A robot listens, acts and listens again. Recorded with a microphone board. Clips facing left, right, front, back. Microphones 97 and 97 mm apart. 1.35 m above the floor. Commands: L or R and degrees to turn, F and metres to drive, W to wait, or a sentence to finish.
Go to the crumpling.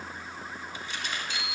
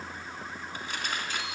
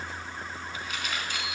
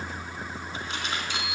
R120
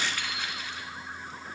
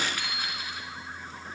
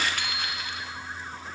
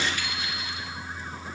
W
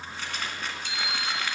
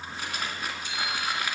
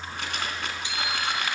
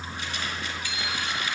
R10
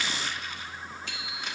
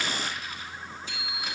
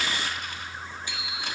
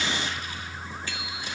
W
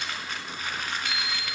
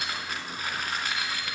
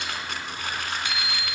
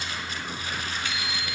F1.0
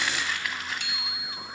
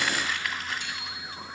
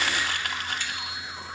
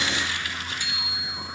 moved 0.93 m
F1.0
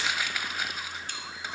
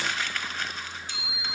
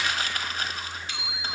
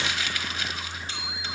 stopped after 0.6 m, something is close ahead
L10
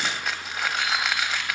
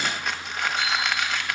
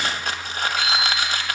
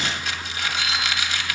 I am next to the crumpling.